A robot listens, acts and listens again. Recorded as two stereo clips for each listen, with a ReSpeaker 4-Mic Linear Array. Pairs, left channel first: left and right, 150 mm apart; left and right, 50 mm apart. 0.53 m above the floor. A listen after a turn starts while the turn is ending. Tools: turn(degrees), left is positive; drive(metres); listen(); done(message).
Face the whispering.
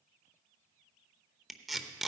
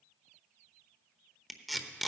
listen()
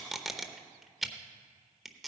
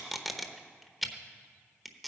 listen()
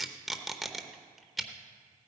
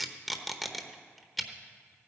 done("I can't make out whispering to turn to.")